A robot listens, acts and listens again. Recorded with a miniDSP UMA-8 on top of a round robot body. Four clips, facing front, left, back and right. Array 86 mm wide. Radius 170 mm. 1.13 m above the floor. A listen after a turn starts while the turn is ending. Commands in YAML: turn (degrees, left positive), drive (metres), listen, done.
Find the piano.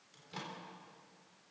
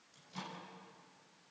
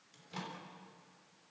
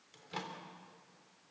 listen: true
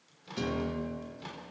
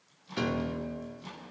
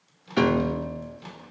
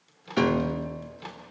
turn: -150
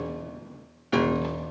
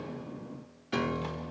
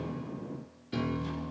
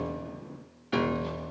turn: -10
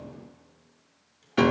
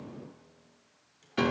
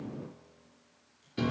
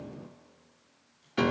done: "Found it: a piano, straight ahead, under 1 m away."